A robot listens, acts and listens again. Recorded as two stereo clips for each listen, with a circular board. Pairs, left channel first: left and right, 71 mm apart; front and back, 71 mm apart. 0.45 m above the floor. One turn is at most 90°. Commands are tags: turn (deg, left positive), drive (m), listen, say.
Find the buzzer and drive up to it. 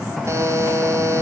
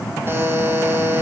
<turn deg="-90"/>
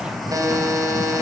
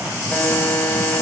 <turn deg="-65"/>
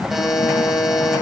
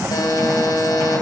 <drive m="1.0"/>
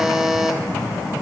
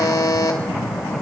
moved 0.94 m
<drive m="1.0"/>
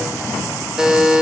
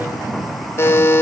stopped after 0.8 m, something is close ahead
<turn deg="-15"/>
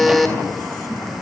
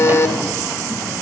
<say>I am next to the buzzer.</say>